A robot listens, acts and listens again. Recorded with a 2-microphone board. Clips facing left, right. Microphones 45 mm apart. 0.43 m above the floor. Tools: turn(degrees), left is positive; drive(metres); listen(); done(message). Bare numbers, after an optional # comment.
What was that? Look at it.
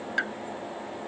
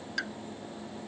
# The pop: about 25° left or 155° left.
turn(25)
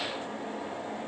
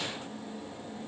listen()
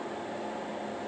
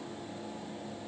done("I heard a pop, but can't make it out now. It was about straight ahead or 130° left.")